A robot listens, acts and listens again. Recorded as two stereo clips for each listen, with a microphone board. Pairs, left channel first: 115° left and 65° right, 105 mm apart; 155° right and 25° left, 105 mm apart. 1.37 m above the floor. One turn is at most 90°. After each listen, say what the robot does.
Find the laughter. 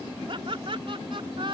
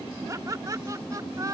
Turn 35° right.
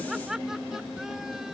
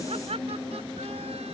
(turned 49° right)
Turn 20° left.
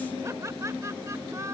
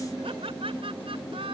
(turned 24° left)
Found it: laughter, straight ahead.